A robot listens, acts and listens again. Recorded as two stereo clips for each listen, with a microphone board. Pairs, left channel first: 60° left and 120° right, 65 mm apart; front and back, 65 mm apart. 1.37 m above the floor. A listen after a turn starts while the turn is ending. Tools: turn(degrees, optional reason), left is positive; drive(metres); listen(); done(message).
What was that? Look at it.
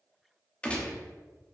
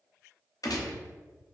turn(degrees=-10, reason="The gunshot: 10° right.")
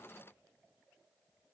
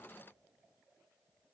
done("Facing where the gunshot came from. I can't hear it now.")